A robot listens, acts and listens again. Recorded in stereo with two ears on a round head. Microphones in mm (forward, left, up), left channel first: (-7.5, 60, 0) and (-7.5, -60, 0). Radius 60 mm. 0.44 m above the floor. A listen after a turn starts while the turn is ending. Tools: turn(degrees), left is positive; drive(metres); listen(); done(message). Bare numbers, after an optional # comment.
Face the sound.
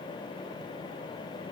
listen()
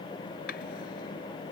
turn(90)
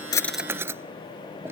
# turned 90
# So it is at 20° right.
turn(-20)
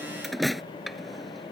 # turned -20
done("Found it: a drawer, straight ahead.")